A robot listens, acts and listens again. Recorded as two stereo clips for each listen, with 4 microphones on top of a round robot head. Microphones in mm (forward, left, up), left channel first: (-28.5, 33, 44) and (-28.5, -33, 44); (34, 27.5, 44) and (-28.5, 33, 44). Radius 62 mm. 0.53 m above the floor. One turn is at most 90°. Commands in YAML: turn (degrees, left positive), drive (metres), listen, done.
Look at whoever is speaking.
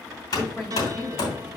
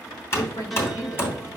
done: "Facing the woman speaking, 2 to 4 m away."